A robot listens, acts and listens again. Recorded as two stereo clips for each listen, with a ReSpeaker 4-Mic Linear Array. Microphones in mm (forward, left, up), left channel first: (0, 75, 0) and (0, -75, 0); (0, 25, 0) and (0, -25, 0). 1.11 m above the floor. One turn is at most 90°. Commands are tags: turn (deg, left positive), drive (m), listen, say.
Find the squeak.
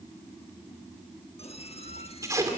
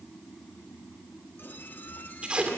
<turn deg="40"/>
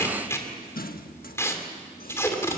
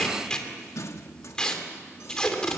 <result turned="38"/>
<turn deg="90"/>
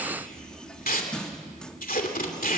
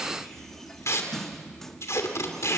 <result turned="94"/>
<say>Facing the squeak.</say>